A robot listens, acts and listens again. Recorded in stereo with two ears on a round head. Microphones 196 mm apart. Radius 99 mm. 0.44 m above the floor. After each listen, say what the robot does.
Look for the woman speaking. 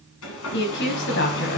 Turn 50° left.
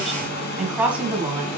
Turn 10° right.
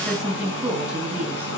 Turn 10° right.
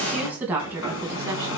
Turn 10° right.
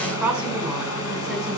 Found it: a woman speaking, straight ahead.